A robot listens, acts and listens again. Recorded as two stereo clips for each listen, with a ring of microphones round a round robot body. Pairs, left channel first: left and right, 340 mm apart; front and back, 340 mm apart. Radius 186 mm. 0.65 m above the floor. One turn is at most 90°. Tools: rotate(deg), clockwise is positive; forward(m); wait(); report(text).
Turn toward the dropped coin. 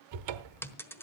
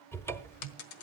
report("Found it: a dropped coin, straight ahead, 1 to 2 m away.")